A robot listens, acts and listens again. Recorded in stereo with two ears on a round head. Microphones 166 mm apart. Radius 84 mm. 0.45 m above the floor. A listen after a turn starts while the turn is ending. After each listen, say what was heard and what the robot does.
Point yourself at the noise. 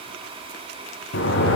The sliding door: about 65° left or 115° left. Turn 65° left.
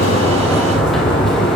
Found it: a sliding door, straight ahead.